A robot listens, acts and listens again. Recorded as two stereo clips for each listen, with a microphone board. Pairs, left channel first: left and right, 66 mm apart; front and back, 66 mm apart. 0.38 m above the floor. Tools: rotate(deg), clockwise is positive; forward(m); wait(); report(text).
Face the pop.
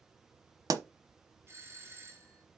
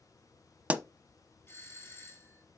rotate(110)
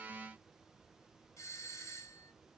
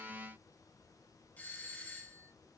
report("Facing where the pop came from. I can't hear it now.")